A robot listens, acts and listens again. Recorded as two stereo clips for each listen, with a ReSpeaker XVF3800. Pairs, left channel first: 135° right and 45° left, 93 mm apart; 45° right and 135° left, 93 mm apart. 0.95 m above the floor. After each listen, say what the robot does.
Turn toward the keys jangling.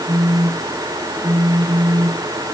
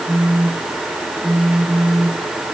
Keep listening.
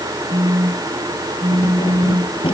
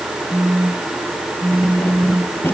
Turn 110° right.
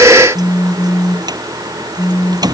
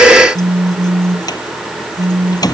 Found it: keys jangling, straight ahead.